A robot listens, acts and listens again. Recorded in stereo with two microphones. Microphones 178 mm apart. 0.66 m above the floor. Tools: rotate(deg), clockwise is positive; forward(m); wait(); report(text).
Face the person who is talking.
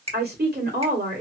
rotate(65)
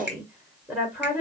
rotate(10)
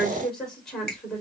report("Found it: a woman speaking, straight ahead.")